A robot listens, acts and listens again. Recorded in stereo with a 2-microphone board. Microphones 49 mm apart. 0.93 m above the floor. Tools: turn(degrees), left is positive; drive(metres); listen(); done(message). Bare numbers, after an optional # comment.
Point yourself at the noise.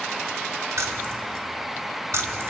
# The keys jangling: about 70° right or 110° right.
turn(-70)
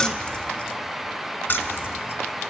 # So it is at 40° left.
turn(40)
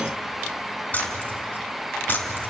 # The keys jangling is now 40° left.
turn(40)
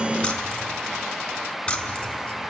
# The keys jangling is now 20° left.
turn(20)
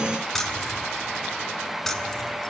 done("Found it: keys jangling, straight ahead.")